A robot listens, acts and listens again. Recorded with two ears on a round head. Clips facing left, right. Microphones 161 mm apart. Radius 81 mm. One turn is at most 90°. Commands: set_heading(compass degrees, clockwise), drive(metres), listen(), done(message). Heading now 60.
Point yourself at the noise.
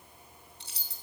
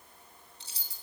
set_heading(5)
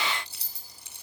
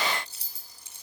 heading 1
set_heading(311)
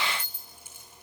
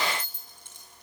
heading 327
done("Found it: keys jangling, straight ahead, 2 to 4 m away.")